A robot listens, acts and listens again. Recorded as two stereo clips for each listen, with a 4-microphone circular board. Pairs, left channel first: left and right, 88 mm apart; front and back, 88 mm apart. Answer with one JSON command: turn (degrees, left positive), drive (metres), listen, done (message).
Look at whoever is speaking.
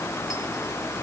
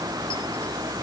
{"listen": true}
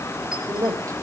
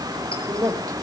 {"turn": -135}
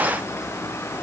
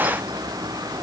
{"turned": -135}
{"listen": true}
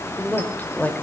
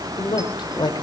{"turn": 20}
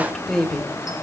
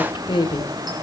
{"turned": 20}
{"done": "Facing the woman speaking, 2 to 4 m away."}